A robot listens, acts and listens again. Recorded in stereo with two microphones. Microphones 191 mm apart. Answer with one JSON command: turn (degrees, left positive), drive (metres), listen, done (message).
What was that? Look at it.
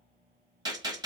{"turn": -20}
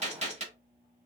{"turn": -140}
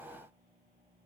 {"done": "Facing where the gunshot came from. I can't hear it now."}